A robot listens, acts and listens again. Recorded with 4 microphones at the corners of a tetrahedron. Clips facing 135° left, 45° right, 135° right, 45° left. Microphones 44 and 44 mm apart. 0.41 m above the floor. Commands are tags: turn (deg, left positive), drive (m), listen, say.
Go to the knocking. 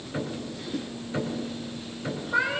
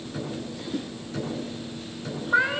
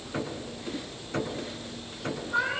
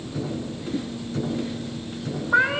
<turn deg="-155"/>
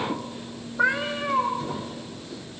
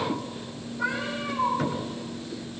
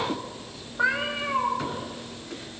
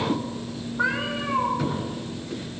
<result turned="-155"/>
<turn deg="-35"/>
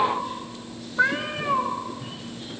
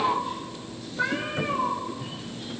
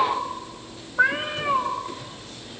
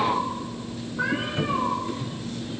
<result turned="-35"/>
<drive m="1.0"/>
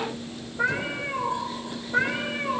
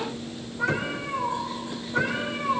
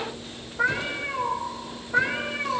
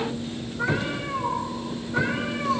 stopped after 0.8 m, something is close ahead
<listen/>
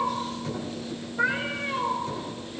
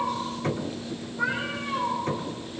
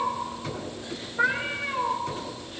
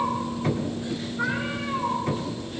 <say>Blocked. The knocking is further on, straight ahead.</say>